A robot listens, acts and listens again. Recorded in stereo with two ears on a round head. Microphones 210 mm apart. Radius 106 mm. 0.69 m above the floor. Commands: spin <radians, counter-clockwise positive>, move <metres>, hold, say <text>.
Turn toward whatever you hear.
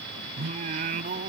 spin -0.70
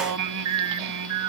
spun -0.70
spin -1.66
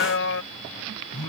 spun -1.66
spin 1.05
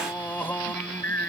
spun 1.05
spin 0.17
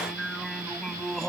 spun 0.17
say Facing the singing.